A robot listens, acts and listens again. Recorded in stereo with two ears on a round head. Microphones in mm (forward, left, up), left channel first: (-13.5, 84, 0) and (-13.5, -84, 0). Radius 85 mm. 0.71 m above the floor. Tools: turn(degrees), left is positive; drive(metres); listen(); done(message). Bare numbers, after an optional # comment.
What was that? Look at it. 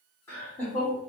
turn(30)
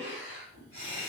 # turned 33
# So it is at 30° right.
turn(-30)
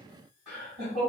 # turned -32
done("Facing the laughter.")